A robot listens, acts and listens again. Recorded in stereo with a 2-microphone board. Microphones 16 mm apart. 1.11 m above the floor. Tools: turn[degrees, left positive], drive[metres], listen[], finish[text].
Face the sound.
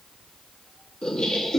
Action: turn[90]
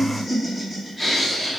Action: finish[Facing the laughter.]